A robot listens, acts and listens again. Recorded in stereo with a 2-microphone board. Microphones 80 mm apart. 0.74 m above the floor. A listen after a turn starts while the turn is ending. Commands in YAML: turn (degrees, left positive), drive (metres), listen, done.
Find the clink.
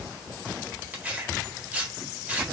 listen: true
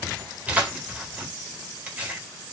listen: true
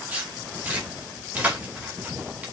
done: "I can't make out a clink to turn to."